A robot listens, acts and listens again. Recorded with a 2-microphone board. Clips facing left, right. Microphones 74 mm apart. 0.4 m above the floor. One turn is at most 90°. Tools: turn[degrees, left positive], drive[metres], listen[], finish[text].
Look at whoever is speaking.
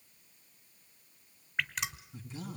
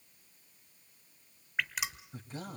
Thought: The man speaking: about 50° right or 130° right.
Action: turn[-50]
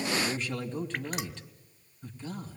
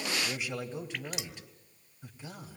Thought: So it is at 15° right.
Action: turn[-15]
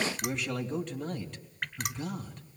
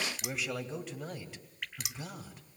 Action: finish[Found it: a man speaking, straight ahead, 2 to 4 m away.]